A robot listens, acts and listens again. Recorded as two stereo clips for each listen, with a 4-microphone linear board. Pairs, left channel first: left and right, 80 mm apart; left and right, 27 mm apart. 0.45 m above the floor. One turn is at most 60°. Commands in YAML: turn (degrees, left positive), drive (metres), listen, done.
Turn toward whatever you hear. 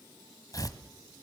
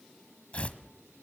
turn: 50
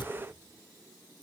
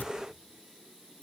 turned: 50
listen: true
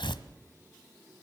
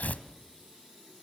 turn: 60
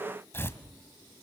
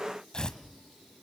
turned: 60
turn: 30
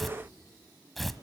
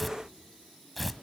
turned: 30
done: "Facing the tearing paper, 1 to 2 m away."